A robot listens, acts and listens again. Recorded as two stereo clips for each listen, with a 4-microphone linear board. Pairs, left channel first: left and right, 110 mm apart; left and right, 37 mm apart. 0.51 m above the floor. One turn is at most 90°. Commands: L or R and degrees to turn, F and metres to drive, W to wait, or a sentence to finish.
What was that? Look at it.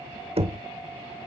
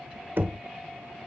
R60
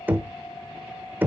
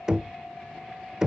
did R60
R20
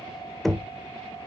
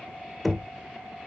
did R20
Found it: knocking, straight ahead.